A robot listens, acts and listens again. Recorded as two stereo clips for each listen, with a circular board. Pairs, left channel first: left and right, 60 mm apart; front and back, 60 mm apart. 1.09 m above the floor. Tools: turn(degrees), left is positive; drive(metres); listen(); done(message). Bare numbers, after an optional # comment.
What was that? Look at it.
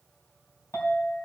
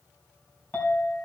# The clink: 60° left.
turn(60)
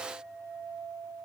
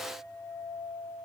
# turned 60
done("Found it: a clink, straight ahead.")